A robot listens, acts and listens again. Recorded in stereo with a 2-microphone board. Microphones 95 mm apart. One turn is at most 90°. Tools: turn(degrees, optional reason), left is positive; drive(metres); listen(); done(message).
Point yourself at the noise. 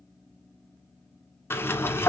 turn(degrees=25, reason="The sliding door: about 25° left or 155° left.")
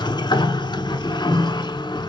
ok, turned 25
turn(degrees=90, reason="So it is at 130° left.")
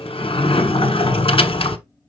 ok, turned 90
turn(degrees=75, reason="The sliding door is now 75° left.")
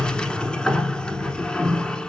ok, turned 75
turn(degrees=10, reason="The sliding door is now 10° left.")
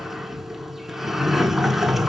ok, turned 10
done("Facing the sliding door, 1 to 2 m away.")